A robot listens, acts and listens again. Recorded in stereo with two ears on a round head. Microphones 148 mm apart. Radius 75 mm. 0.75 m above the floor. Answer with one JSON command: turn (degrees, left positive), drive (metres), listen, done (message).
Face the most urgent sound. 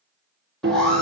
{"turn": 30}
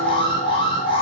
{"turn": 145}
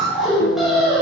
{"done": "Found it: an alarm, straight ahead."}